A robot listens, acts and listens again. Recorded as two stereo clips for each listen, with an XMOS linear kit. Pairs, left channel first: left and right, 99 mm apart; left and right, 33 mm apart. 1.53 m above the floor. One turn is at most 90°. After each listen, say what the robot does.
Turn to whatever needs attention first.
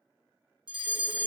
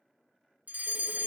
Turn 50° right.
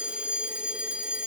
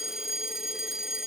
Turn 15° right.
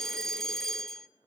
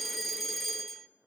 Facing the fire alarm.